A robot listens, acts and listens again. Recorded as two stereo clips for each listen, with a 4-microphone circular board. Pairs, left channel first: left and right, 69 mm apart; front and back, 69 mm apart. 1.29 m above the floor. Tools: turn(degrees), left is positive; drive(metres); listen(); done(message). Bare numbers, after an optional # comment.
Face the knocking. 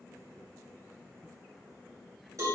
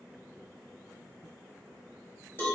listen()
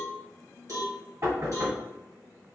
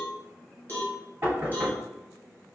# The knocking: 130° right.
turn(-130)
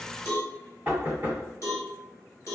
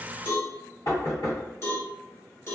# The knocking is now 25° right.
turn(-25)
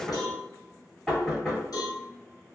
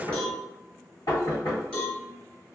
done("Found it: knocking, straight ahead.")